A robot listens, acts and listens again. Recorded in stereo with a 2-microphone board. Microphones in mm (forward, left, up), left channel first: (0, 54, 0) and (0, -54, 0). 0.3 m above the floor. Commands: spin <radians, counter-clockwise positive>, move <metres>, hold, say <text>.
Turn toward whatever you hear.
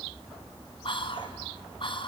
spin 0.96
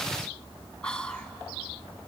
spin 0.17
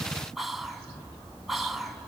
say Found it: whispering, straight ahead, 2 to 4 m away.